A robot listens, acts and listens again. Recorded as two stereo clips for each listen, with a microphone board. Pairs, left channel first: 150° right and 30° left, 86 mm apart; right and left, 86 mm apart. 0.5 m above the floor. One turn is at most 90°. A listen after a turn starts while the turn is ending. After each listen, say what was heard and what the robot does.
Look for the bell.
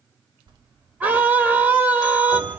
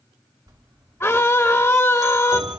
The bell: 50° left. Turn 50° left.
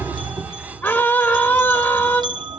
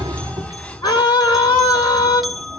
Found it: a bell, straight ahead.